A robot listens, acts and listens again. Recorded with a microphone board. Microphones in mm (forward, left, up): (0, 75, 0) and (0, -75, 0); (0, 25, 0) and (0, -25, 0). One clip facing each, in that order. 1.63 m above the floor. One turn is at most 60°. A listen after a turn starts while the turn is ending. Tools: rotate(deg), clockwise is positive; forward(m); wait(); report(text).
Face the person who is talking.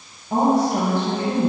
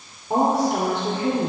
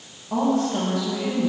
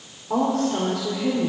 rotate(60)
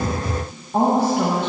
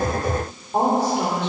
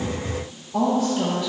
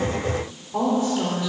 rotate(20)
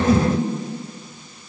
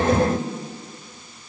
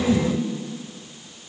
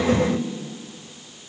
report("Facing the woman speaking.")